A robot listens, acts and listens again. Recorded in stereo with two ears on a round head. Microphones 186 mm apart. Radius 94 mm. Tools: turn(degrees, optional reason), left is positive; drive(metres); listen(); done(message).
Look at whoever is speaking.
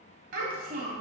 turn(degrees=-40, reason="The child speaking: about 40° right or 140° right.")
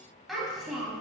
done("Found it: a child speaking, straight ahead, 1 to 2 m away.")